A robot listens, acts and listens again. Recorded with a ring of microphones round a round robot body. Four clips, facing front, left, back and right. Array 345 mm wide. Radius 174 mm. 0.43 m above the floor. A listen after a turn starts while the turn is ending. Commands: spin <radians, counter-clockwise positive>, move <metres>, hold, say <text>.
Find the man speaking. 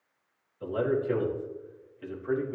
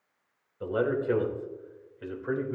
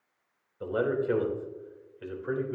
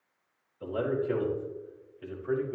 spin 2.18
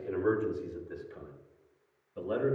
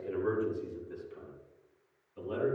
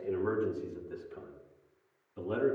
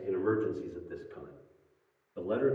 spin -0.79
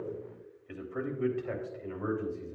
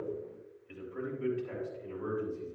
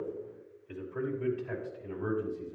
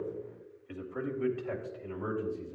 spin -0.52
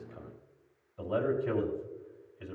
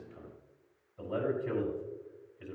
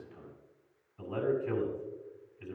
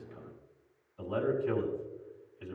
spin 0.17
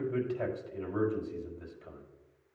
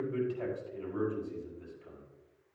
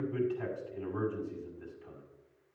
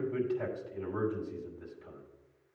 say Facing the man speaking, over 4 m away.